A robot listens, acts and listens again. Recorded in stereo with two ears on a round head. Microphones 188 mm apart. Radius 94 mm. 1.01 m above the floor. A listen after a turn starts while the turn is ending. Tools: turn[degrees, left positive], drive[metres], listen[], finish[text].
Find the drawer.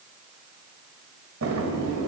Action: turn[-90]
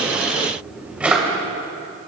Action: finish[Facing the drawer.]